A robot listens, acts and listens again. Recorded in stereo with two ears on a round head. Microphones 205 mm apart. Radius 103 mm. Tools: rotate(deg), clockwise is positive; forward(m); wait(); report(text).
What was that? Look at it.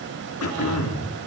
rotate(-70)
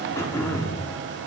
rotate(-15)
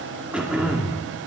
report("Found it: throat clearing, straight ahead.")